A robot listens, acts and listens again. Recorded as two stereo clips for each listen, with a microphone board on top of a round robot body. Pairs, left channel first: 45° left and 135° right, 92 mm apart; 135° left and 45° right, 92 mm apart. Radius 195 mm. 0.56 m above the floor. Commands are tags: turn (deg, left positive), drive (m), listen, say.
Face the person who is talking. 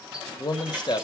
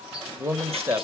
<turn deg="15"/>
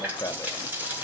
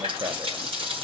<listen/>
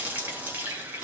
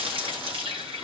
<listen/>
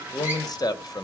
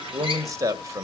<say>Facing the man speaking.</say>